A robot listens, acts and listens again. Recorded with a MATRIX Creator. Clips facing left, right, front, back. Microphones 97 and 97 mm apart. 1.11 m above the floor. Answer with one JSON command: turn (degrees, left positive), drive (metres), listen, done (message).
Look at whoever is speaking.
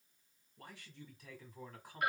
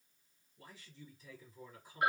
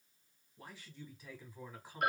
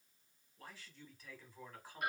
{"turn": 80}
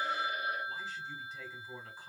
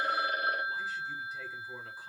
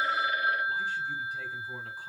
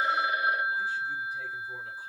{"done": "Facing the man speaking."}